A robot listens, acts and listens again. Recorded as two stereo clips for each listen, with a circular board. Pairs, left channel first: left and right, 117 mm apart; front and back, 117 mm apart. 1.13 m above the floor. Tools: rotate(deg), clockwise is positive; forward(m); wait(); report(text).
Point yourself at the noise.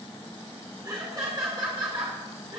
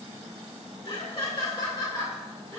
rotate(60)
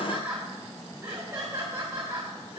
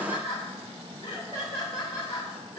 rotate(40)
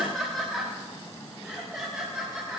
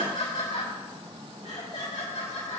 report("Facing the laughter, 2 to 4 m away.")